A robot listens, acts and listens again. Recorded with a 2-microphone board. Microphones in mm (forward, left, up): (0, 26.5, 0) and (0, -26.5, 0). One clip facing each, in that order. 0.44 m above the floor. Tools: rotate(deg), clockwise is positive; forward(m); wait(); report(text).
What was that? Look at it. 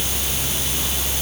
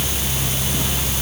wait()
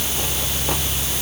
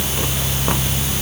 wait()
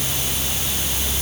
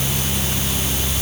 report("I can't make out anything.")